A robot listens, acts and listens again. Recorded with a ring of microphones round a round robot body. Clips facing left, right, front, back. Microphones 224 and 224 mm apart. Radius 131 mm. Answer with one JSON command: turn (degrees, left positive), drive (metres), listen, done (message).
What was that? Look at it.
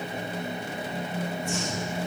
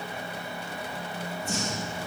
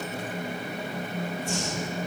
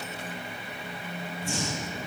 {"turn": -150}
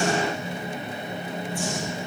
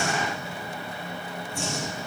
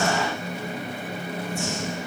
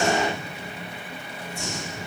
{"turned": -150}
{"turn": -25}
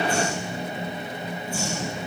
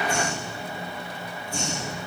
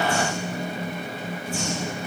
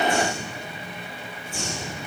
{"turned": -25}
{"done": "Found it: breathing, straight ahead."}